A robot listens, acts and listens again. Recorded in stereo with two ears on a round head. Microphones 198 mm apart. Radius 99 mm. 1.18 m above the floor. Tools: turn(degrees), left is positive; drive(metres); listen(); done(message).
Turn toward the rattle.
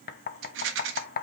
turn(degrees=-60)
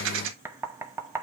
turn(degrees=-60)
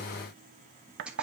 done("Found it: a rattle, straight ahead, 1 to 2 m away.")